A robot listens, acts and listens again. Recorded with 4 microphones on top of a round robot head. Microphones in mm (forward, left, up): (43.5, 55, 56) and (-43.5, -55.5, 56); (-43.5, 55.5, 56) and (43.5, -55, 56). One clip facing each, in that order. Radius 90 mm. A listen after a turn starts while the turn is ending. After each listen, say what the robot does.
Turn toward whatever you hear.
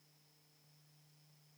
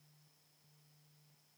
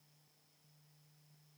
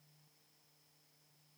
Keep listening.
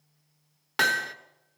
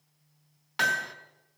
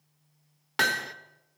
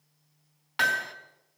Turn 85° left.
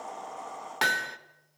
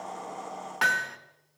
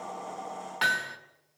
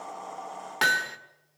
Turn 10° right.
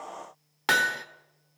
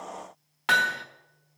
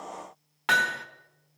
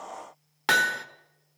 Facing the hammering, 1 to 2 m away.